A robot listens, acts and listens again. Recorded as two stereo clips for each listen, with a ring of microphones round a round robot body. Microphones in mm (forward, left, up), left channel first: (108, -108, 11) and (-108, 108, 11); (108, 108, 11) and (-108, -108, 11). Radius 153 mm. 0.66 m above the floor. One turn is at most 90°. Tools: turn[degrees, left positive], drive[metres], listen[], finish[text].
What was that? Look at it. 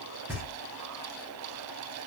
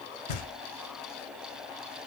Thought: The knocking: 50° left.
Action: turn[50]
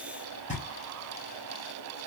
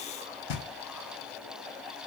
Thought: The knocking is now 20° left.
Action: turn[20]
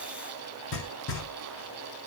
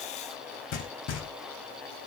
Action: finish[Found it: knocking, straight ahead, 1 to 2 m away.]